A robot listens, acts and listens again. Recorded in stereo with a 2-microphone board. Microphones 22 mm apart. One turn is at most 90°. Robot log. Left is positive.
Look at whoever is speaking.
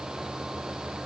cmd idle
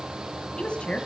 note: The woman speaking: about 65° left or 115° left.
cmd yaw +65
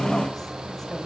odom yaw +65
note: So it is at 25° left.
cmd yaw +25
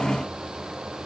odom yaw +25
cmd idle
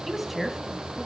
end: Found it: a woman speaking, straight ahead, 2 to 4 m away.